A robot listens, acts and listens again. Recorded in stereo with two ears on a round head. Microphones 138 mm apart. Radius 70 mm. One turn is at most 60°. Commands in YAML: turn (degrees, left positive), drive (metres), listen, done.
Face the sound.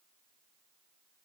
listen: true
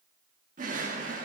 turn: -55
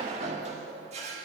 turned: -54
turn: -55
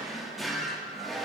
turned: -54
done: "Found it: a drawer, straight ahead, 1 to 2 m away."